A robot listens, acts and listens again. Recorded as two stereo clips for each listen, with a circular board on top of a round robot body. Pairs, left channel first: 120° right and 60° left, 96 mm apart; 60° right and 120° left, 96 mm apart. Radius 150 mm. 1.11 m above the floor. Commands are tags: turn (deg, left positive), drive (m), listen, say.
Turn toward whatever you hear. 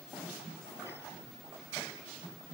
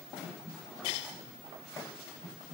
<listen/>
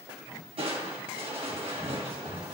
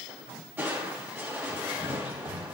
<turn deg="55"/>
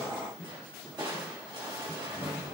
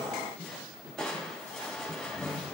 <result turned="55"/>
<turn deg="25"/>
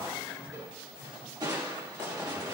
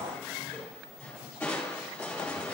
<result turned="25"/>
<turn deg="15"/>
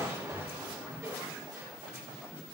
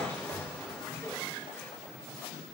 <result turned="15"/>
<say>Found it: crushing, straight ahead.</say>